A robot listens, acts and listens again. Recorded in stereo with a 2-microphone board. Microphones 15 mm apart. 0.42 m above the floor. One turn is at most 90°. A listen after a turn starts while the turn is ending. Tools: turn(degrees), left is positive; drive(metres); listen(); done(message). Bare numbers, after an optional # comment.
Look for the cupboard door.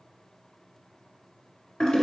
listen()
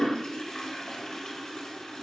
listen()
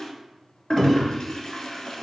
# The cupboard door: about 25° right or 155° right.
turn(-25)
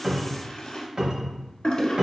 # So it is at 130° right.
turn(-90)
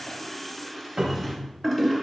# The cupboard door is now 45° right.
turn(-45)
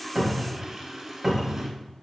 done("Facing the cupboard door, under 1 m away.")